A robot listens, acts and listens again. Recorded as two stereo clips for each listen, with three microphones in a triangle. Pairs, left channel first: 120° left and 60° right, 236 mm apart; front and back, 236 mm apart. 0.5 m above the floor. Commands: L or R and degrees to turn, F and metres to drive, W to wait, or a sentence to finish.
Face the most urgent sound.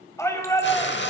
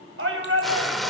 R165
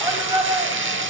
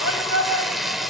L15
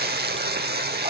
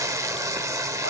W
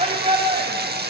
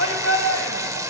Found it: a shout, straight ahead.